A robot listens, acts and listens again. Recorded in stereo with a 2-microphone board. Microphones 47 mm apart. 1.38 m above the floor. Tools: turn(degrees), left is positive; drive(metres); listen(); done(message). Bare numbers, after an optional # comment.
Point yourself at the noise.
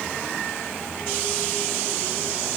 listen()
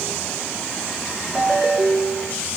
# The ringtone: about 15° right or 165° right.
turn(-15)
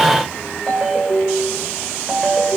done("Facing the ringtone, 2 to 4 m away.")